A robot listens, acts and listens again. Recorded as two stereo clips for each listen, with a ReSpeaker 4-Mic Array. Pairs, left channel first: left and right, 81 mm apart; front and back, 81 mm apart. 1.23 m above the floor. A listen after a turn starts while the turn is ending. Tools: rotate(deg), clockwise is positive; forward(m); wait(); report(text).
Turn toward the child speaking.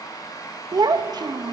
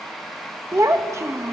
rotate(125)
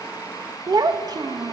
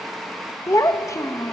rotate(50)
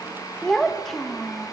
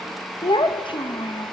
report("Found it: a child speaking, straight ahead, 1 to 2 m away.")